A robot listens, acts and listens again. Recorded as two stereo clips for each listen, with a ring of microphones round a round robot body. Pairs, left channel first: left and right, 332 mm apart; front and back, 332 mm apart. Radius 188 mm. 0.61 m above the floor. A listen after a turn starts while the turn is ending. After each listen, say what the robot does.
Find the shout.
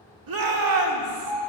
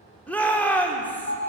Turn 85° right.
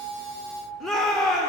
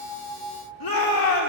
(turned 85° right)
Found it: a shout, straight ahead, 1 to 2 m away.